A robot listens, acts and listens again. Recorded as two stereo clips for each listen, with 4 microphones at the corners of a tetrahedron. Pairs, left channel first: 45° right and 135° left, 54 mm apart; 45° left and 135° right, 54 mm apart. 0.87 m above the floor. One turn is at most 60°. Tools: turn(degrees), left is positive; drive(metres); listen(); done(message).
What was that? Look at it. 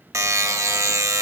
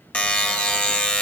turn(degrees=60)
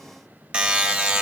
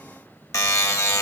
turn(degrees=60)
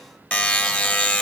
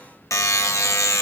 turn(degrees=20)
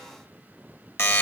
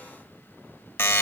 done("Found it: a buzzer, straight ahead, under 1 m away.")